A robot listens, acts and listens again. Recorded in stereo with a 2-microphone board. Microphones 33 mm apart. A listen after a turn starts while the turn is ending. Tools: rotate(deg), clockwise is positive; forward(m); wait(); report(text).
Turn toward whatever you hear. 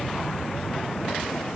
wait()
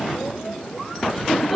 rotate(-30)
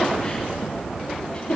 rotate(-150)
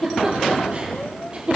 rotate(35)
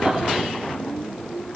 wait()
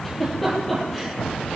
report("Facing the giggle.")